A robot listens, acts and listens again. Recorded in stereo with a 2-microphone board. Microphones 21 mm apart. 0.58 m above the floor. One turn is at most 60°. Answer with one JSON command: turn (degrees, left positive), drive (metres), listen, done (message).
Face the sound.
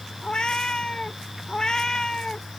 {"turn": 30}
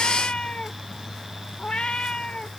{"turn": 60}
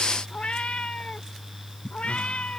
{"turn": 60}
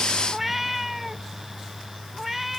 {"turn": -10}
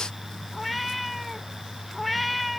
{"done": "Facing the cat meowing."}